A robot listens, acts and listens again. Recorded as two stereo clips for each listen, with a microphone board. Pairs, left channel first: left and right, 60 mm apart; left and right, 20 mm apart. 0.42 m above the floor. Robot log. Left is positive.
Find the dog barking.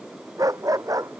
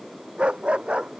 note: The dog barking: about 70° right or 110° right.
cmd yaw -70
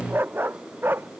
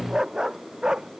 note: So it is at 40° right.
cmd yaw -40
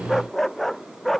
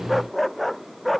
end: Found it: a dog barking, straight ahead.